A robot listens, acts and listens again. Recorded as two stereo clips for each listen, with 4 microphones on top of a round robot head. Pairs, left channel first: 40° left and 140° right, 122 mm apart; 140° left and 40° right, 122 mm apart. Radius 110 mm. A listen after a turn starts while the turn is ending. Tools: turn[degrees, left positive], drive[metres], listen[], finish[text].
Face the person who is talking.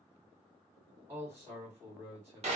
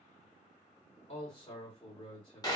Thought: The man speaking: 155° left.
Action: turn[155]
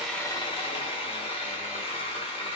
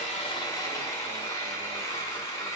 Action: listen[]
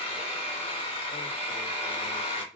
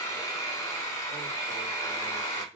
Thought: The man speaking is now 30° left.
Action: turn[30]
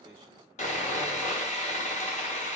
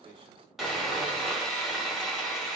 Action: listen[]
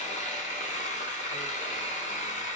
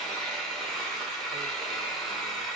Action: listen[]
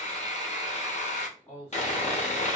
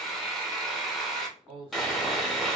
Action: finish[Facing the man speaking, 2 to 4 m away.]